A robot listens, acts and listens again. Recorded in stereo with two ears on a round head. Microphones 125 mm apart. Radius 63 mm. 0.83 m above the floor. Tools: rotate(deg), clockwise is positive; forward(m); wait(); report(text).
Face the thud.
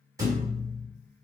rotate(25)
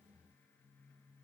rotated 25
wait()
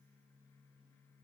report("I heard a thud, but can't make it out now. It was about straight ahead or 130° right.")